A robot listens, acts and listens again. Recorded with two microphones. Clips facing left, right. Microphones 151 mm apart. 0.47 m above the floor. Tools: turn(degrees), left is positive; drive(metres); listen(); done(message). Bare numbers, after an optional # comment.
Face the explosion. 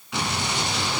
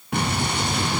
# The explosion: about 60° right or 120° right.
turn(-60)
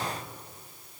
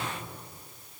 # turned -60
listen()
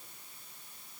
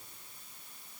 done("I heard an explosion, but can't make it out now. It was about straight ahead or 60° right.")